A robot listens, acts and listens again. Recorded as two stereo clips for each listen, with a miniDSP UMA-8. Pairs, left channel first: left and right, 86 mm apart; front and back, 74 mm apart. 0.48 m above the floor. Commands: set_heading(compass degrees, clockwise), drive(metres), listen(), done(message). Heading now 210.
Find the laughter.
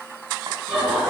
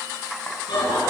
set_heading(220)
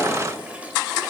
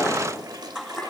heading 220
listen()
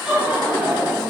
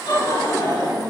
set_heading(235)
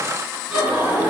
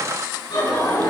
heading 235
set_heading(245)
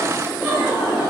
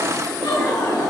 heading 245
set_heading(255)
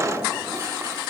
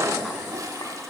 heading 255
listen()
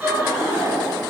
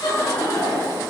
set_heading(265)
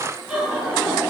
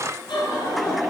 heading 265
done("Facing the laughter.")